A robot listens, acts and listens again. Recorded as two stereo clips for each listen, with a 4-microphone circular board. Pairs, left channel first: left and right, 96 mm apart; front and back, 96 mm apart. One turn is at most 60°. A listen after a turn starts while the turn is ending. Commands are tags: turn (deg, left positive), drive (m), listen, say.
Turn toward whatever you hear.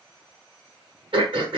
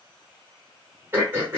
<turn deg="-60"/>
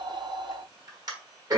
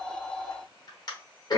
<turn deg="-45"/>
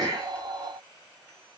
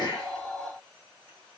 <listen/>
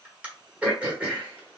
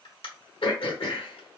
<turn deg="-15"/>
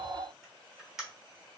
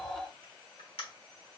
<say>Found it: throat clearing, straight ahead.</say>